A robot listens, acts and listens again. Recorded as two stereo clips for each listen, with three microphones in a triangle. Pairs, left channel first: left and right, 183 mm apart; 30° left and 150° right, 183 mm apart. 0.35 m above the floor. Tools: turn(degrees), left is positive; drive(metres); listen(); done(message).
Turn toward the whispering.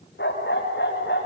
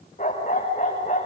listen()
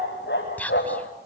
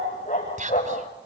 turn(degrees=170)
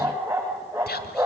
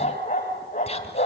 turn(degrees=80)
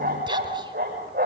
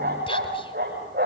listen()
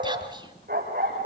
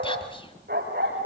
listen()
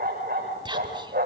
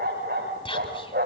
turn(degrees=-30)
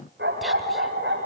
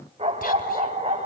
listen()
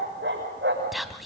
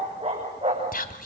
done("Facing the whispering, 2 to 4 m away.")